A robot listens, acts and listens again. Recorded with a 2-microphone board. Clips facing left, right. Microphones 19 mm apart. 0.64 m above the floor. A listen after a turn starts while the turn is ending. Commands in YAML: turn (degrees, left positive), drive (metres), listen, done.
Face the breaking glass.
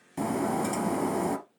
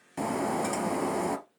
turn: -20
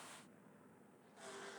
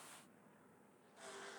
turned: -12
listen: true
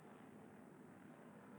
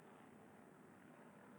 done: "I heard breaking glass, but can't make it out now. It was about 10° right or 150° right."